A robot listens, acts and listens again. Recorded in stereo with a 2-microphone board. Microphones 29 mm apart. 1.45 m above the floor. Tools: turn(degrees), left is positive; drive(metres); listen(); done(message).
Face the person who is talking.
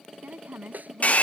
turn(degrees=-65)
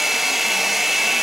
listen()
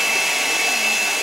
listen()
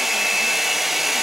done("I heard a woman speaking, but can't make it out now. It was about straight ahead or 50° right.")